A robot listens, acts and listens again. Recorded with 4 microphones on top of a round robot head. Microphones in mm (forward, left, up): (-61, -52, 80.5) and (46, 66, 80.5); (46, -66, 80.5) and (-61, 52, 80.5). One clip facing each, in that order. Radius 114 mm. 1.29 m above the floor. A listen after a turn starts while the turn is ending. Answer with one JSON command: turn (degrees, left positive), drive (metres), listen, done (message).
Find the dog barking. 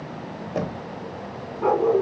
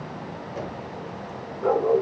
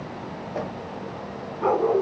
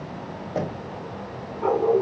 {"turn": -100}
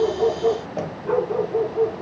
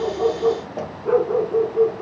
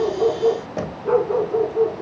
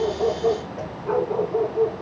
{"turn": 15}
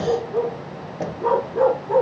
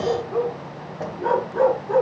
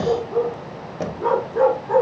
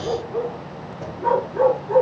{"done": "Found it: a dog barking, straight ahead, over 4 m away."}